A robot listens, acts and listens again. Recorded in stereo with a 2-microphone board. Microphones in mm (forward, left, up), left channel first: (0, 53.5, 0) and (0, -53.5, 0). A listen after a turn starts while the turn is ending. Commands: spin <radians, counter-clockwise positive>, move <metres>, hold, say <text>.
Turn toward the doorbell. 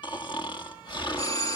spin 0.52
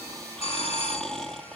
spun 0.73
spin 1.83
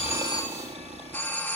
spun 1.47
spin 0.35
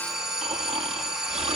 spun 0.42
say Facing the doorbell.